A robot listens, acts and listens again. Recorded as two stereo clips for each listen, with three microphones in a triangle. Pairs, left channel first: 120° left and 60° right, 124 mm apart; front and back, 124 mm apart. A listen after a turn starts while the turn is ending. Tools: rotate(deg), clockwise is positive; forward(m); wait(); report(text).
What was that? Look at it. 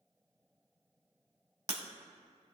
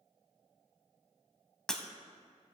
rotate(85)
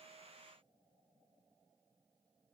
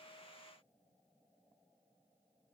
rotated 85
report("I heard breaking glass from this way, but can't make it out now.")